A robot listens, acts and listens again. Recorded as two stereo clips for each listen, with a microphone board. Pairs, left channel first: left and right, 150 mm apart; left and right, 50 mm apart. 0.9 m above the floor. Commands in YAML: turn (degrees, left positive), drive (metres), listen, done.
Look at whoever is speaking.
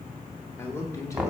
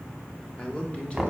turn: 20
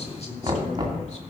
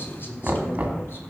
listen: true
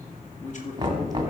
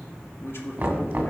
turn: 125
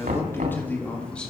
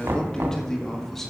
done: "Found it: a man speaking, straight ahead."